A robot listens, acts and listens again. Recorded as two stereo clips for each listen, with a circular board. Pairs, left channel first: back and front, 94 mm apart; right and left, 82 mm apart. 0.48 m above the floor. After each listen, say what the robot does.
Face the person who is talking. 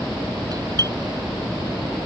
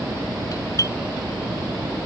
Keep listening.
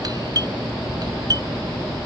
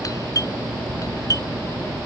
Keep listening.
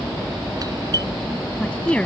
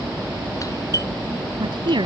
Turn 100° left.
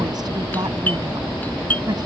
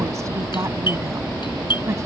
Turn 40° left.
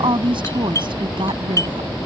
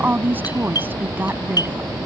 Turn 25° left.
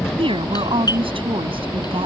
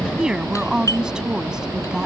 Turn 10° left.
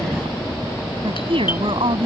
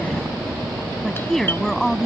Facing the woman speaking.